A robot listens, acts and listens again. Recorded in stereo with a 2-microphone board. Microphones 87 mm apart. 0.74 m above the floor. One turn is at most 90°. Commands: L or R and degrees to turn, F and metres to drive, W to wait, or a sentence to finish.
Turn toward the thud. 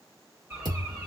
R55
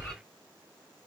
W
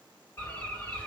I heard a thud, but can't make it out now. It was about straight ahead or 70° right.